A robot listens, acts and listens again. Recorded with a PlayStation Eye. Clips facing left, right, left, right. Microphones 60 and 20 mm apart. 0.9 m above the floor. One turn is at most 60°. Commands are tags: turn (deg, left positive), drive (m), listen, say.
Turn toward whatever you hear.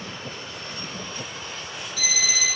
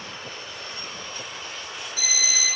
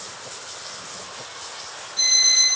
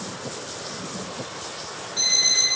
<turn deg="-25"/>
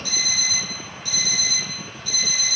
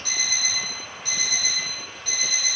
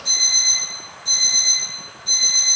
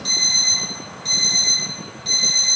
<turn deg="-60"/>
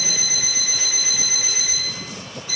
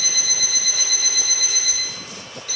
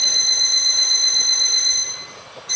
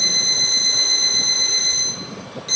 <turn deg="-60"/>
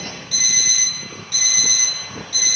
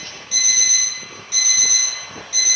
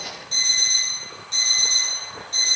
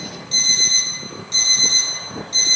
<turn deg="-15"/>
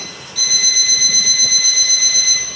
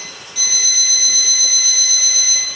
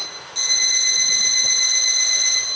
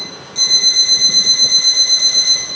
<turn deg="-10"/>
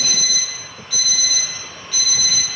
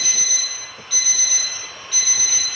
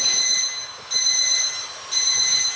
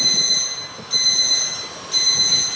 <say>Found it: an alarm clock, straight ahead.</say>